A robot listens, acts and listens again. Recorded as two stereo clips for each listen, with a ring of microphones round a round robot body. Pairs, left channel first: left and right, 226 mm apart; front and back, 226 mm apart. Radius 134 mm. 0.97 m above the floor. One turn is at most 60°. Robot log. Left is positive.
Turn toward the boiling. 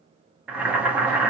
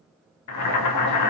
end: Facing the boiling.